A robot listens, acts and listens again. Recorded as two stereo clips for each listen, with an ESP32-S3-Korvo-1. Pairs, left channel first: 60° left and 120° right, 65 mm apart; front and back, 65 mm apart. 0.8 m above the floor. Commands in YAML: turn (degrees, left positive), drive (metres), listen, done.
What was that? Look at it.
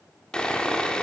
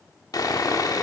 turn: -15
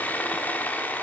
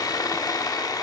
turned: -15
done: "Found it: sawing, straight ahead, under 1 m away."